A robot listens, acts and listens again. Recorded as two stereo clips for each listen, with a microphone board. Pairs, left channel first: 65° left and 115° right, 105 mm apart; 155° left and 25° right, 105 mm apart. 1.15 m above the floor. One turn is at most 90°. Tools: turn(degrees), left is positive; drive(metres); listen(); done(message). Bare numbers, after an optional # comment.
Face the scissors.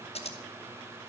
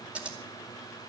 # The scissors: 55° left.
turn(55)
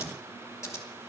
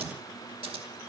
done("Found it: scissors, straight ahead, 2 to 4 m away.")